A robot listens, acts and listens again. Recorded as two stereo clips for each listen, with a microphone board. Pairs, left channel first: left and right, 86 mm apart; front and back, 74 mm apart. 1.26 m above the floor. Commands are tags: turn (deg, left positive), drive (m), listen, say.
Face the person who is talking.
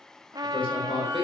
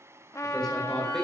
<turn deg="85"/>
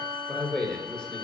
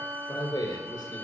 <turn deg="10"/>
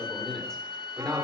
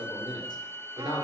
<turn deg="10"/>
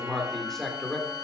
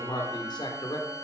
<turn deg="10"/>
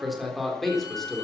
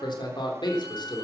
<say>Found it: a man speaking, straight ahead, 2 to 4 m away.</say>